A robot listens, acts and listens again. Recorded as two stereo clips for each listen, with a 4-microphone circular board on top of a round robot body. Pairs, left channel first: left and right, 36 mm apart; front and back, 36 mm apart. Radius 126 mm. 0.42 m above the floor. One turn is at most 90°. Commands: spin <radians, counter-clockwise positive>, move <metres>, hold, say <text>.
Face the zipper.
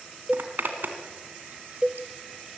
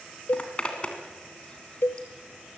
spin -1.05
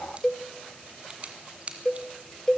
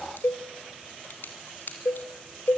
spin -0.61
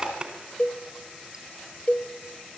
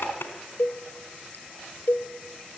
spin -0.44
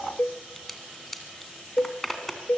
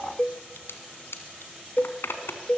spin 0.17
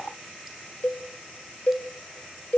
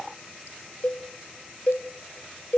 hold
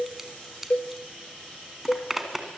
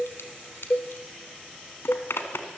say Facing the zipper.